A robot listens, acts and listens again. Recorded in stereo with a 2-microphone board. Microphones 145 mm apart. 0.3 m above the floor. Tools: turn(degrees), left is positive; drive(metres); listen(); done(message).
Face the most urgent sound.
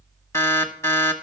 turn(degrees=20)
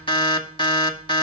turn(degrees=140)
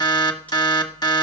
turn(degrees=35)
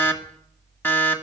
turn(degrees=15)
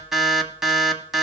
done("Facing the alarm, 1 to 2 m away.")